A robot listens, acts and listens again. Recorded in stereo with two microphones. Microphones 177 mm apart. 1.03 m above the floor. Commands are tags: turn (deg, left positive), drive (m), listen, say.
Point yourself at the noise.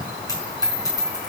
<turn deg="20"/>
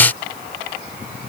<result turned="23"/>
<listen/>
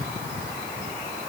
<say>I heard a dropped coin, but can't make it out now. It was about 5° right or 135° left.</say>